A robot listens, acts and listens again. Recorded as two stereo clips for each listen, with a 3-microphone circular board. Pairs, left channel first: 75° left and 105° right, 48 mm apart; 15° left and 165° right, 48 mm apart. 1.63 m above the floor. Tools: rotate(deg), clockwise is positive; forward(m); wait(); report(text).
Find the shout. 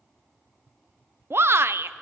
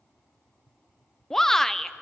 rotate(70)
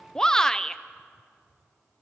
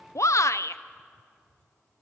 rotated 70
report("Found it: a shout, straight ahead.")